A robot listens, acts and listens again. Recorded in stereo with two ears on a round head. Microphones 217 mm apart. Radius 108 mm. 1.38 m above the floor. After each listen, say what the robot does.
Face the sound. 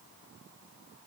Keep listening.
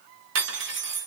Turn 55° right.
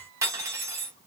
Turn 15° right.
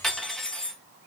Facing the cutlery clinking.